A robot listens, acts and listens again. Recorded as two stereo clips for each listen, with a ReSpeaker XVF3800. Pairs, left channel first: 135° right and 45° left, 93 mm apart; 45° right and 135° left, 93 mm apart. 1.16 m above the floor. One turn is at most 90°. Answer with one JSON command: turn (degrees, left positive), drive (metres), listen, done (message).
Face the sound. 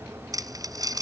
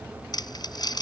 {"done": "Facing the crumpling."}